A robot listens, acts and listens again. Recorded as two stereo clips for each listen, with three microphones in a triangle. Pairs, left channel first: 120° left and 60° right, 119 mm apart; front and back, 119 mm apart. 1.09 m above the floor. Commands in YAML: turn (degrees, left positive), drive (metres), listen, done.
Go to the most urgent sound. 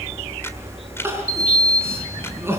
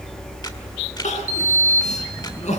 turn: 10
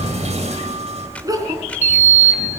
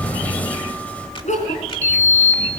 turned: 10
drive: 1.0
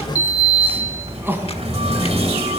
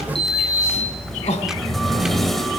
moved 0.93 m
turn: 10
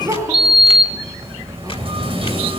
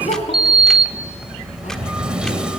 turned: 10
drive: 1.0
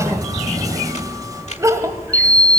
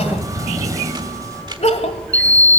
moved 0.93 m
drive: 1.0
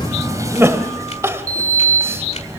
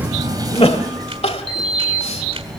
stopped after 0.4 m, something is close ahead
done: "Arrived at the crying, straight ahead."